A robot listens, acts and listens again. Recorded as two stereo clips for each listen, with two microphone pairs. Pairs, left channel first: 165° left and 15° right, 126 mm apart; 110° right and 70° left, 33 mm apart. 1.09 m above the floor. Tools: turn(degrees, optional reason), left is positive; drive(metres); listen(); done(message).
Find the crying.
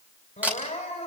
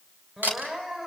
turn(degrees=130, reason="The crying: 130° left.")
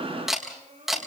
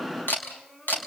turn(degrees=-35, reason="The crying is now 35° right.")
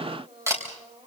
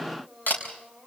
turn(degrees=-15, reason="The crying is now 15° right.")
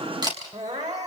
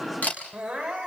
done("Facing the crying.")